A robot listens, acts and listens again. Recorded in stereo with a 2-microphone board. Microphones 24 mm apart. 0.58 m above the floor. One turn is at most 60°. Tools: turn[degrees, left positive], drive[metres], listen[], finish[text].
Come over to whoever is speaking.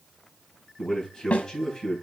Thought: The man speaking: about 30° left or 150° left.
Action: turn[30]
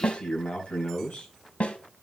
Thought: So it is at 120° left.
Action: turn[60]
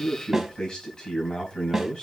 Thought: The man speaking is now 30° left.
Action: turn[30]
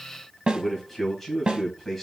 Thought: The man speaking is now 10° left.
Action: turn[10]
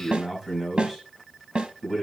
Action: drive[1.0]
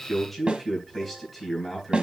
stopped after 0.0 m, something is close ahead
Action: finish[Something is in my way. I am facing the man speaking but have not reached it.]